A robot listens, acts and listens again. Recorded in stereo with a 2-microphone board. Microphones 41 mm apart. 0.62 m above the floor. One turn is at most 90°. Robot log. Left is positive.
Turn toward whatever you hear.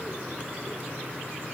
cmd idle
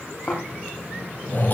note: The snoring: about 50° left or 130° left.
cmd yaw +50
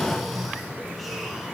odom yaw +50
end: Facing the snoring, over 4 m away.